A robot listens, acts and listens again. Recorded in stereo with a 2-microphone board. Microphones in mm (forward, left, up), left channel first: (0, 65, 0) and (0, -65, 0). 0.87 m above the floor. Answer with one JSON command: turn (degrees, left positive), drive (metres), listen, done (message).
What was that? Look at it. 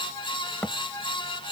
{"turn": 15}
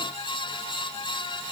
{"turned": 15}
{"listen": true}
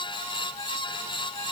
{"done": "I heard a thud, but can't make it out now. It was about straight ahead or 150° left."}